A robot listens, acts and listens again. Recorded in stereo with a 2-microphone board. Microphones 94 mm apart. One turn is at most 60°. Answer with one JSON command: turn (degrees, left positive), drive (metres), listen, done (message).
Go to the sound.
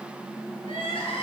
{"turn": 60}
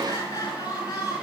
{"turn": 35}
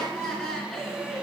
{"drive": 1.0}
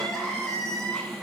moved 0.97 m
{"drive": 1.0}
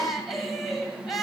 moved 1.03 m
{"drive": 1.0}
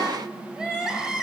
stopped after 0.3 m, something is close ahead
{"done": "Arrived at the crying, straight ahead."}